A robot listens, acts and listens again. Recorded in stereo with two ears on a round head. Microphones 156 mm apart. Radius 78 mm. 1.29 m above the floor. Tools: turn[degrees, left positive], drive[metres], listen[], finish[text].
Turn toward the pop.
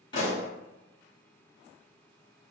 Thought: The pop: about 25° left or 155° left.
Action: turn[25]
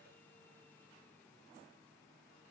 Action: listen[]
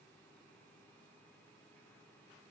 Action: finish[I heard a pop, but can't make it out now. It was about straight ahead or 130° left.]